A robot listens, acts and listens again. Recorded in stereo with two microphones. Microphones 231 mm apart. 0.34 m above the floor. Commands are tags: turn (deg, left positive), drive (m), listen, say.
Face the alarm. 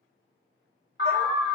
<turn deg="50"/>
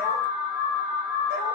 <turn deg="75"/>
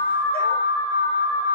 <turn deg="15"/>
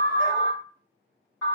<say>Facing the alarm.</say>